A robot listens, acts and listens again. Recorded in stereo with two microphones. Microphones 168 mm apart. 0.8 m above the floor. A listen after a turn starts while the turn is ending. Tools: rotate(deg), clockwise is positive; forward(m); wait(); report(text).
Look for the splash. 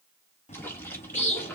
rotate(-30)
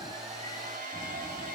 wait()
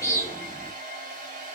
report("I heard a splash, but can't make it out now. It was about 15° right or 135° left.")